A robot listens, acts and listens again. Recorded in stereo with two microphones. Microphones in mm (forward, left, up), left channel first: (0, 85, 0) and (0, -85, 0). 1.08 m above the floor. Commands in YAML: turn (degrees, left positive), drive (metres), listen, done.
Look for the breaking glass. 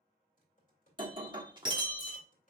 turn: -25
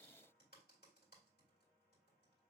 listen: true
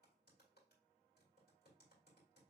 done: "I heard breaking glass, but can't make it out now. It was about straight ahead or 130° right."